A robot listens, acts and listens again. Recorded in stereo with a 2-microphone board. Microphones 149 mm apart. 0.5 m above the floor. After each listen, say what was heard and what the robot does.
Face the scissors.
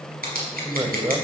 Turn 90° right.
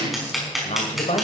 Facing the scissors, over 4 m away.